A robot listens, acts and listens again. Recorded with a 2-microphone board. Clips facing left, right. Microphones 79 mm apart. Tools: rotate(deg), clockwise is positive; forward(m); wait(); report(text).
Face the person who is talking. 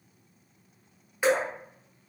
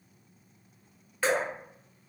wait()
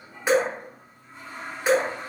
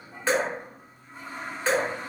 wait()
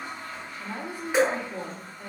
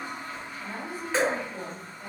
rotate(-60)
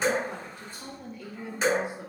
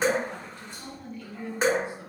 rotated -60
rotate(-15)
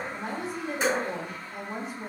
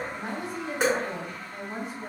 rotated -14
report("Found it: a woman speaking, straight ahead, under 1 m away.")